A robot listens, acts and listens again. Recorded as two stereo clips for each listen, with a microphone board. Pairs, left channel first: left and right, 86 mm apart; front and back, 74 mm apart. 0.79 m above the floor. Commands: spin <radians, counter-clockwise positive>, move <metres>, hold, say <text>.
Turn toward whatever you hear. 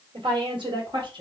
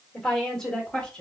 spin -1.31
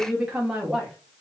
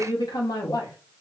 say Facing the woman speaking.